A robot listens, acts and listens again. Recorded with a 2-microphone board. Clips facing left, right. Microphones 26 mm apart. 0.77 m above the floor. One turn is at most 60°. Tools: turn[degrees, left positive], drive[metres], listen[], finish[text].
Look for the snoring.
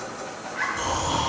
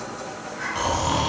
Action: turn[-60]
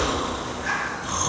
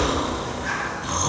Thought: So it is at 15° right.
Action: turn[-15]
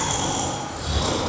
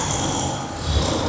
Thought: The snoring is now 10° right.
Action: turn[-10]
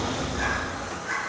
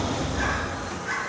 Action: finish[Found it: snoring, straight ahead.]